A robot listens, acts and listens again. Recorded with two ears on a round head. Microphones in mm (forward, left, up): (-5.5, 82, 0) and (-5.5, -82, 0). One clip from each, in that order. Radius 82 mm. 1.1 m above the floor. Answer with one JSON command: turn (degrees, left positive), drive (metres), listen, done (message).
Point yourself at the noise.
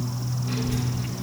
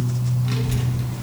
{"turn": -35}
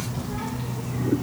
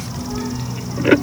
{"turn": -130}
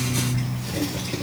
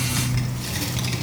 {"turn": -80}
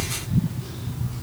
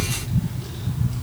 {"done": "Facing the child speaking."}